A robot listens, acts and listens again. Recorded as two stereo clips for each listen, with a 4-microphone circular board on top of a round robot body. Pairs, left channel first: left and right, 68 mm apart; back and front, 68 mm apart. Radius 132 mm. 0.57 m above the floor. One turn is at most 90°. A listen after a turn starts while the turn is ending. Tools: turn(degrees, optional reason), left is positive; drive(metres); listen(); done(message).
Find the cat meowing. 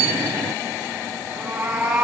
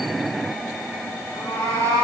turn(degrees=-90, reason="The cat meowing: 160° right.")
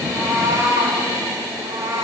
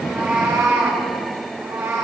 turn(degrees=-65, reason="The cat meowing is now 65° right.")
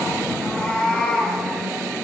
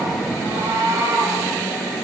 done("Found it: a cat meowing, straight ahead.")